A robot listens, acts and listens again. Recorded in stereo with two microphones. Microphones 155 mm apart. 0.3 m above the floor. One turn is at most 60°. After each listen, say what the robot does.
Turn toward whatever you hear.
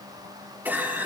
Turn 30° right.
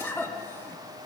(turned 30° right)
Turn 15° left.
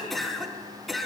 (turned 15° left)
Facing the cough, 2 to 4 m away.